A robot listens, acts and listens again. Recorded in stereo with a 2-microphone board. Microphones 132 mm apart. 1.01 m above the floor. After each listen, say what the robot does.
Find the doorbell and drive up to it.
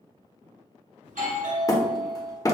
Turn 90° right.
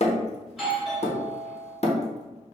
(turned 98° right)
Drive 1.0 m forward.
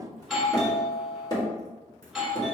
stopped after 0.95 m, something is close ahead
Arrived at the doorbell, straight ahead.